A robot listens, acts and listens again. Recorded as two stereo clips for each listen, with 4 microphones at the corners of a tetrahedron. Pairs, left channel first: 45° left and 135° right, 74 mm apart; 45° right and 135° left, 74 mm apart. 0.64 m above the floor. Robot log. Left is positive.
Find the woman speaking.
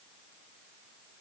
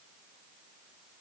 cmd idle
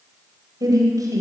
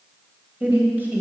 note: The woman speaking: 160° right.
cmd yaw -160
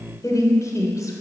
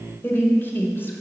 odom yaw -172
note: The woman speaking is now 10° left.
cmd yaw +10
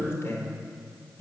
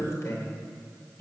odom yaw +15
end: Facing the woman speaking.